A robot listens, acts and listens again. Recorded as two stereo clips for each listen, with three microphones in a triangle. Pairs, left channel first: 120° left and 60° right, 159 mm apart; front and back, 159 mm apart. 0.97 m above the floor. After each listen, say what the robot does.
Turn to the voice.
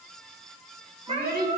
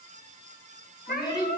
Turn 65° right.
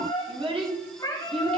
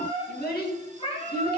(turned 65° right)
Turn 10° right.
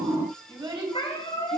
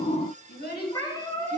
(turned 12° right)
Facing the child speaking.